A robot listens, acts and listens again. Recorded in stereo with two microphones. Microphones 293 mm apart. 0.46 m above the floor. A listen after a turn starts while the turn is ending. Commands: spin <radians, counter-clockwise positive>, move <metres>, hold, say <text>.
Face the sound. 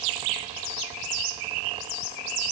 hold
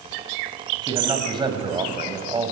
spin -0.35
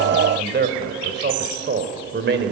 spin -2.44
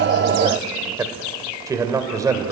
spin -0.17
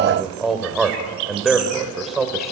say Found it: a man speaking, straight ahead, 2 to 4 m away.